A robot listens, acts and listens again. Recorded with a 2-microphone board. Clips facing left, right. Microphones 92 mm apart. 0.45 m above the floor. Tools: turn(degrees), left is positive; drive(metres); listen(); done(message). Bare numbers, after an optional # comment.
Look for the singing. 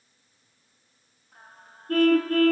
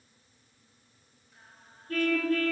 # The singing: about 70° left or 110° left.
turn(70)
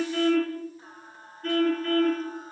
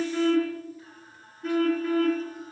# So it is at 35° left.
turn(35)
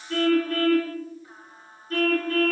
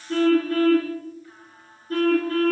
# The singing is now 25° left.
turn(25)
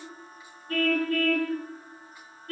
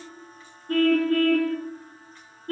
# The singing is now 10° left.
turn(10)
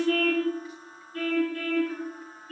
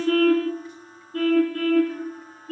done("Facing the singing.")